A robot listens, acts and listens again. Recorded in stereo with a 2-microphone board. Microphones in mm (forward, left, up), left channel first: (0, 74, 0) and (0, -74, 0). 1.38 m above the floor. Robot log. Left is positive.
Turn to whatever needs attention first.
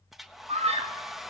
note: The scream: about 50° right or 130° right.
cmd yaw -50
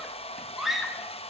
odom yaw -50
end: Found it: a scream, straight ahead.